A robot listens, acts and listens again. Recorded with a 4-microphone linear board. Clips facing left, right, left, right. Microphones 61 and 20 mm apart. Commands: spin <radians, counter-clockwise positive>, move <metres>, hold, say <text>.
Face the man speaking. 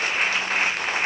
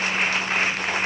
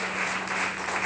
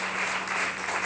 hold
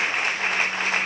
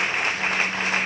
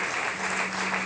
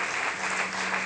hold
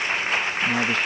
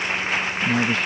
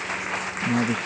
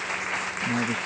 spin 0.52
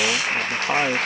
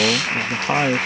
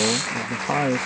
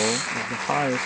spin -0.17
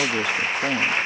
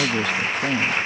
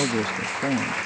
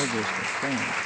spin 0.17
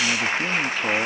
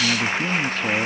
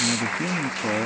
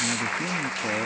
say Found it: a man speaking, straight ahead.